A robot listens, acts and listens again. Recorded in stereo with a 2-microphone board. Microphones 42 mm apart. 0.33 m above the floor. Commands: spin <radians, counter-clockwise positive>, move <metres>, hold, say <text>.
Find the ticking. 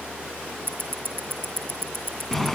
spin -0.96
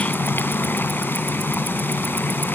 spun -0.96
hold
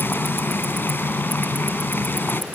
hold
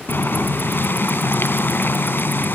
say I heard ticking, but can't make it out now. It was about straight ahead or 70° right.